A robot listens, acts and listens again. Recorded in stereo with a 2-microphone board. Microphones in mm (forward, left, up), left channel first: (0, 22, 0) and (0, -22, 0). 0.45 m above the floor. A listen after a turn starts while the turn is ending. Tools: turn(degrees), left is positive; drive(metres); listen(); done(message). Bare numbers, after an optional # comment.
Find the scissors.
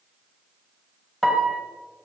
listen()
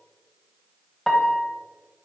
listen()
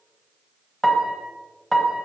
done("I can't make out scissors, only a piano.")